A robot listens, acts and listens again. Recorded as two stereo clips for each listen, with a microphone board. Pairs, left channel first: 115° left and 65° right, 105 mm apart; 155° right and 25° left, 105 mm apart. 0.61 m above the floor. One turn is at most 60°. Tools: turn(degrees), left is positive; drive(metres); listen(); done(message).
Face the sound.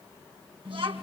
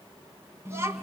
turn(degrees=-45)
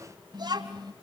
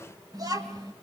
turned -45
turn(degrees=-30)
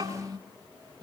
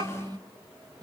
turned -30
turn(degrees=-25)
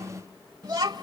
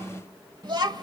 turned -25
turn(degrees=-20)
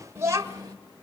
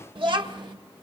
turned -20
turn(degrees=-20)
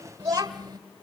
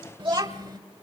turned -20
turn(degrees=-20)
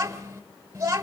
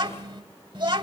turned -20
done("Facing the child speaking, 1 to 2 m away.")